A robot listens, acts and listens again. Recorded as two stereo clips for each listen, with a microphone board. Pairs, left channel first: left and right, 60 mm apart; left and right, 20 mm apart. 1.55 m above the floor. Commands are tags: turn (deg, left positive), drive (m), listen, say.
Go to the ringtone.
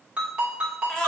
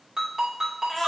<turn deg="-15"/>
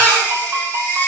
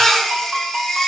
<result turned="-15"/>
<listen/>
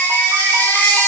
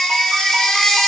<listen/>
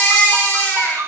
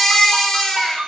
<turn deg="-150"/>
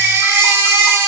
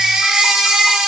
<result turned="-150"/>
<listen/>
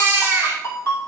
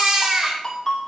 <turn deg="45"/>
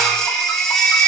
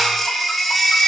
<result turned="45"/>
<listen/>
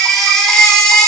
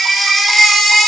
<listen/>
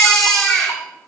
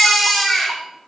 <say>Facing where the ringtone came from. I can't hear it now. I did not reach it.</say>